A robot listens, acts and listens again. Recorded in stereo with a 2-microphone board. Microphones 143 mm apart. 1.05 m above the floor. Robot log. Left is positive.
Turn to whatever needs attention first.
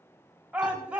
cmd yaw -30
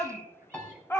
note: So it is at 20° left.
cmd yaw +20
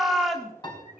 end: Found it: a shout, straight ahead, 1 to 2 m away.